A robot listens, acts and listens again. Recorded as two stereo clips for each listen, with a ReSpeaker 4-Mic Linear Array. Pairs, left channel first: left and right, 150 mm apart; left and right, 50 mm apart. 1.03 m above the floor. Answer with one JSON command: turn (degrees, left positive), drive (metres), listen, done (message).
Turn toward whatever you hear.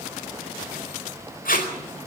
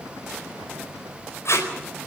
{"turn": 70}
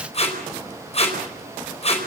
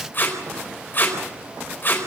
{"turn": 45}
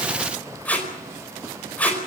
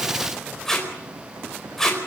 {"turn": 10}
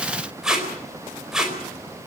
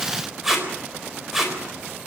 {"done": "Facing the tape being pulled, over 4 m away."}